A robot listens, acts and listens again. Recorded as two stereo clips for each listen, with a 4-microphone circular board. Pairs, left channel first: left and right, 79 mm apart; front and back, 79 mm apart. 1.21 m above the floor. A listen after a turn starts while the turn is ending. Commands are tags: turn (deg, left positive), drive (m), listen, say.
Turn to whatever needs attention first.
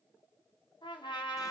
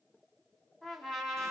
<listen/>
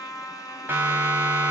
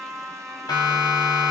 <turn deg="-30"/>
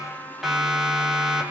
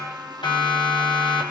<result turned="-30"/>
<say>Facing the siren, over 4 m away.</say>